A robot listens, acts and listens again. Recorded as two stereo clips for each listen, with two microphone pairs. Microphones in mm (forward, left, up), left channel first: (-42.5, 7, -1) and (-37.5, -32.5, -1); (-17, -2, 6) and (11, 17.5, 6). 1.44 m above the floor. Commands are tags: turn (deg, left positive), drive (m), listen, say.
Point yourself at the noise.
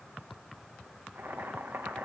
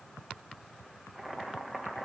<turn deg="-55"/>
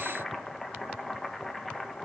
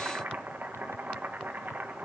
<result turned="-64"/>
<turn deg="10"/>
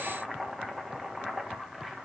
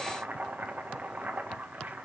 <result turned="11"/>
<say>Found it: boiling, straight ahead, 1 to 2 m away.</say>